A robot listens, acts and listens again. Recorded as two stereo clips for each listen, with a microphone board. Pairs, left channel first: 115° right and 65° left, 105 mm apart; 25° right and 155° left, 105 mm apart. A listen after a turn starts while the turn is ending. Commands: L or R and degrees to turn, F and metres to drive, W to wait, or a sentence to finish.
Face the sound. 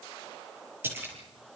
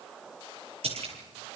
L135
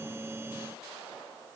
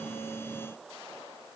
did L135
Facing where the splash came from. I can't hear it now.